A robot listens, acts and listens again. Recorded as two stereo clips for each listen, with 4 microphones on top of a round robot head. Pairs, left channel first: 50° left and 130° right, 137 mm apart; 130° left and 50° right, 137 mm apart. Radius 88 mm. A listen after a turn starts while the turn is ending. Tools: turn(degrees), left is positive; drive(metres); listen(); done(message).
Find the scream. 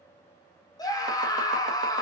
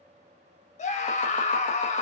turn(degrees=110)
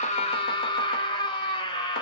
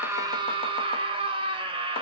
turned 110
done("Facing the scream, 1 to 2 m away.")